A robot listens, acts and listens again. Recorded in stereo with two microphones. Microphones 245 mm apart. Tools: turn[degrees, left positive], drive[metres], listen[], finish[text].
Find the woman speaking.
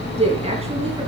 Thought: The woman speaking: about 25° right or 155° right.
Action: turn[-25]
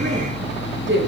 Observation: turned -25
Thought: So it is at 130° right.
Action: turn[-130]
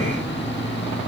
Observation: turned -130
Action: listen[]
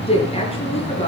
Thought: The woman speaking is now 25° left.
Action: turn[25]
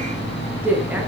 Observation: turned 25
Action: finish[Found it: a woman speaking, straight ahead.]